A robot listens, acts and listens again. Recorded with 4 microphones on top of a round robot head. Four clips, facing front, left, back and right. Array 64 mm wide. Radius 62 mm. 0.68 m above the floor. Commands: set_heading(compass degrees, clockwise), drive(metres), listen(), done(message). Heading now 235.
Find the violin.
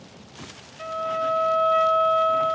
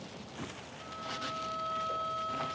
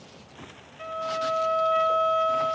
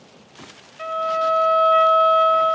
set_heading(315)
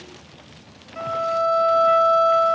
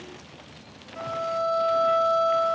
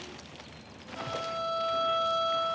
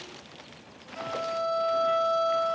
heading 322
set_heading(312)
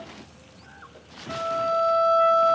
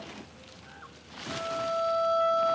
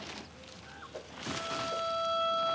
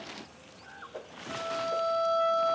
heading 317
done("Facing the violin.")